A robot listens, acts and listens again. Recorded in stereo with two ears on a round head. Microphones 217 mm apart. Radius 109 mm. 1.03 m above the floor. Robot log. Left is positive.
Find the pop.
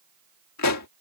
note: The pop: about 70° left or 110° left.
cmd yaw +70
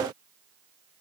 cmd idle
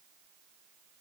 end: I heard a pop, but can't make it out now. It was about straight ahead or 40° left.